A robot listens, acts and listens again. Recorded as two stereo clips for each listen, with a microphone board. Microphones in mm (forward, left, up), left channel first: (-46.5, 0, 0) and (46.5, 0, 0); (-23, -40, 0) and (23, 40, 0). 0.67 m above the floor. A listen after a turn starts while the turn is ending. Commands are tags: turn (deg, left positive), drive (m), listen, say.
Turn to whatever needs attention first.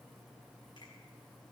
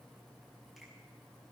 <listen/>
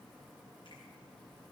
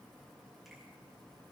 <listen/>
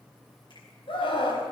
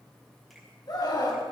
<turn deg="-160"/>
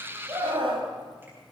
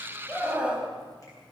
<turn deg="-15"/>
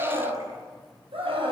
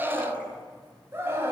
<say>Found it: a scream, straight ahead.</say>